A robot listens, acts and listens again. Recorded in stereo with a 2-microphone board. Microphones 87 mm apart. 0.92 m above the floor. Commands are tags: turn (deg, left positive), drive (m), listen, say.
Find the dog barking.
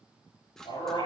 <turn deg="90"/>
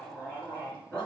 <turn deg="10"/>
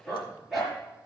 <say>Found it: a dog barking, straight ahead.</say>